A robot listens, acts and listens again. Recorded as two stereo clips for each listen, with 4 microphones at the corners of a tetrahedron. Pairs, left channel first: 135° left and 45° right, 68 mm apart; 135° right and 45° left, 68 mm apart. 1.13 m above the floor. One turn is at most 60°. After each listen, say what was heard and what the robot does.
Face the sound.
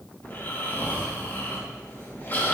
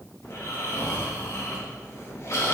The snoring: 170° right. Turn 60° right.
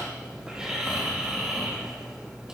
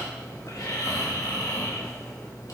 The snoring is now 125° right. Turn 60° right.
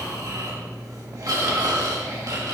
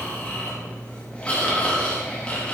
The snoring is now 65° right. Turn 60° right.
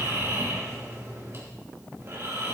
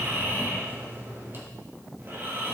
Found it: snoring, straight ahead, 2 to 4 m away.